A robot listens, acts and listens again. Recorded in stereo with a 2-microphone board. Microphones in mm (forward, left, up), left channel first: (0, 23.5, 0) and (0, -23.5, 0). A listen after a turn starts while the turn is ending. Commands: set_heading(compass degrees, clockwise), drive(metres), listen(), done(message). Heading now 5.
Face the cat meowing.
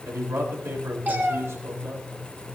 set_heading(45)
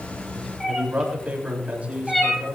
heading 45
done("Facing the cat meowing, 2 to 4 m away.")